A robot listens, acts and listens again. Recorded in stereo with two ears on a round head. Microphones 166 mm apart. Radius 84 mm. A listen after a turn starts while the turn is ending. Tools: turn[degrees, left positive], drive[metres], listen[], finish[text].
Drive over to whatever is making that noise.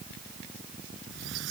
Action: turn[-90]
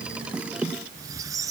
Thought: So it is at 20° right.
Action: turn[-20]
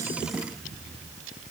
Action: drive[1.0]
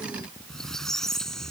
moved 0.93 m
Action: drive[1.0]
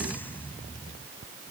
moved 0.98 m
Thought: The squeak is now 10° left.
Action: turn[10]
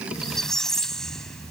Action: drive[1.0]
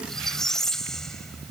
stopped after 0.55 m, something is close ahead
Action: finish[I am next to the squeak.]